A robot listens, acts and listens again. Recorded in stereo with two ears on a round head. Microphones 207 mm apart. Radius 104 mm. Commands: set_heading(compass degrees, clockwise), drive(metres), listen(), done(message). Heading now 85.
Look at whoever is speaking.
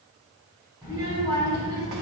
set_heading(105)
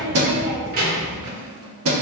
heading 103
set_heading(243)
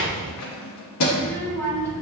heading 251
set_heading(241)
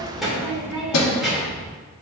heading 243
done("Facing the child speaking, 1 to 2 m away.")